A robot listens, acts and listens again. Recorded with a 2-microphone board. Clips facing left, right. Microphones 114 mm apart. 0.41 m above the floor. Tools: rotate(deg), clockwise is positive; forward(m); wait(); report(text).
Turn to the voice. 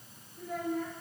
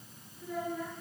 rotate(-55)
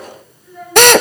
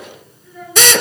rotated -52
report("Facing the child speaking, over 4 m away.")